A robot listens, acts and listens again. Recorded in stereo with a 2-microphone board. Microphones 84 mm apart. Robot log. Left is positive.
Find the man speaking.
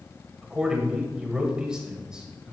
cmd yaw -30
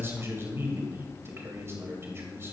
note: So it is at 140° right.
cmd yaw -140
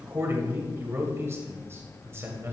note: The man speaking is now 40° right.
cmd yaw -40
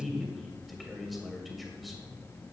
end: Found it: a man speaking, straight ahead, 2 to 4 m away.